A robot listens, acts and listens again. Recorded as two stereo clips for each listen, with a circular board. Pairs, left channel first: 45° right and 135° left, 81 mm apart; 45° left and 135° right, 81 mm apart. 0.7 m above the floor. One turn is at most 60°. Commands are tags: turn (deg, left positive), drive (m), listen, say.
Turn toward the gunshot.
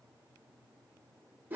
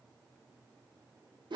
<listen/>
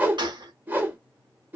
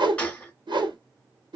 <turn deg="60"/>
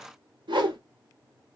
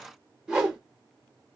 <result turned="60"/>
<turn deg="60"/>
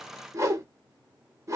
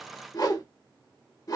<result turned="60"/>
<say>Facing where the gunshot came from. I can't hear it now.</say>